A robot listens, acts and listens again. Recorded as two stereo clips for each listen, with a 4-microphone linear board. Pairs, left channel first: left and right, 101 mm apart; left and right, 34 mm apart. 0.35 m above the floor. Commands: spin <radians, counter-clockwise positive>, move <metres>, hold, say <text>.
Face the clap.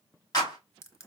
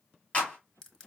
spin 0.70
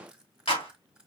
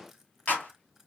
spin 1.66
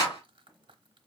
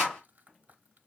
spin 0.70
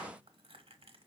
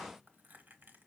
hold
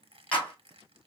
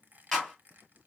spin 0.26
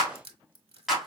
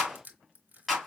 say Facing the clap.